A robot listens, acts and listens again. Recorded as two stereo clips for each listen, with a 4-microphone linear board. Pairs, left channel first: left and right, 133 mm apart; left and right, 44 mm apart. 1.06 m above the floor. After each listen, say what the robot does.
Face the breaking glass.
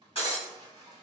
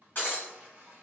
Turn 45° left.
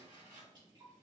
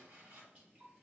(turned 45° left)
Keep listening.
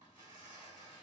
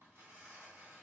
I heard breaking glass, but can't make it out now. It was about straight ahead or 90° left.